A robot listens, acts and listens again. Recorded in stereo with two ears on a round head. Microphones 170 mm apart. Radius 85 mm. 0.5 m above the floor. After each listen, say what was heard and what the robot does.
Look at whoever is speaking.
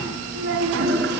The child speaking: about 65° right or 115° right. Turn 65° right.
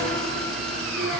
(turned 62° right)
Keep listening.
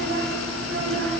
So it is at 60° right. Turn 60° right.
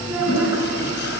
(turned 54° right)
Facing the child speaking.